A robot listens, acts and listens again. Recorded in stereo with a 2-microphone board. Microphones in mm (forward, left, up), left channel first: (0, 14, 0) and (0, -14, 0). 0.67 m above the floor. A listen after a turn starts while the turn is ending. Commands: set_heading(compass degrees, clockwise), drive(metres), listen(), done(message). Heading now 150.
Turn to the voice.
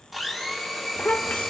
set_heading(85)
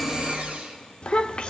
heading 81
set_heading(41)
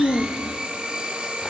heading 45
listen()
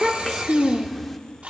done("Facing the child speaking.")